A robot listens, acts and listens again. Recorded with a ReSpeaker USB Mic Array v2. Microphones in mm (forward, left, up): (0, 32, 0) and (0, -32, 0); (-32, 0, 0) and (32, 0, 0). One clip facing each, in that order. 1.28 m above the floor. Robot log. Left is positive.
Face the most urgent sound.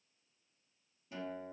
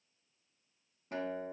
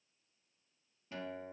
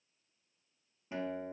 cmd idle
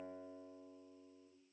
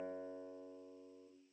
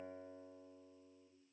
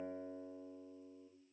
cmd idle
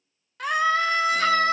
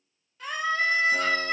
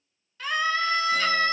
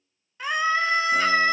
note: The scream: 70° left.
cmd yaw +70
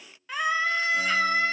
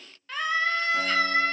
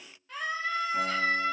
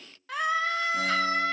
note: The scream is now 10° left.
cmd yaw +10
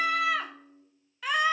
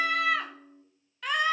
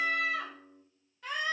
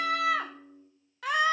end: Facing the scream.